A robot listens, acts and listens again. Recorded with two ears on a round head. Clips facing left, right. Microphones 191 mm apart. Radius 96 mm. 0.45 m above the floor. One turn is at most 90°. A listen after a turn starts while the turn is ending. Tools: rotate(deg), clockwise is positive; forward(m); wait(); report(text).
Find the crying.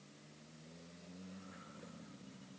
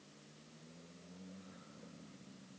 wait()
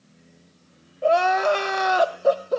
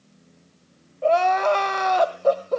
rotate(-30)
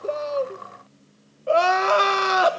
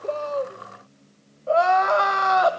rotate(-90)
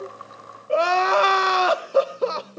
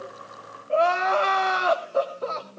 rotate(-60)
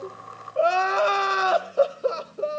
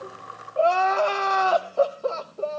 rotate(-20)
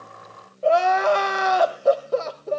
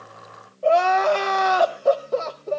report("Facing the crying.")